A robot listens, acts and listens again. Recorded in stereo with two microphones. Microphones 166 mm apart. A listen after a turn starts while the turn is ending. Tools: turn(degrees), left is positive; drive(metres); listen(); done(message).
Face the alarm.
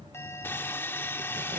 turn(degrees=30)
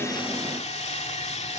listen()
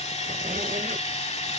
listen()
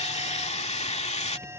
turn(degrees=-15)
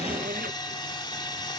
listen()
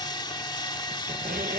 listen()
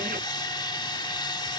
done("I heard an alarm from this way, but can't make it out now.")